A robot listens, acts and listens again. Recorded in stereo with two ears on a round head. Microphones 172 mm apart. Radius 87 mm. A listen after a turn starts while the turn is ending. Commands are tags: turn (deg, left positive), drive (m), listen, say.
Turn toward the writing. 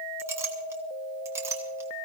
<listen/>
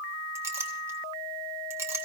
<listen/>
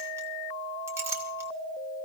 <say>I can't make out writing, only a clink.</say>